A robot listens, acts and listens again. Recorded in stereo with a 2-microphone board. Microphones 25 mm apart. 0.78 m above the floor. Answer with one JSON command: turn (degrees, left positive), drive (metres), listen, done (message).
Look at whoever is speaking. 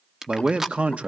{"turn": -60}
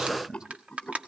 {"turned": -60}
{"turn": -40}
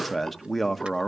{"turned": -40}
{"done": "Facing the man speaking, 1 to 2 m away."}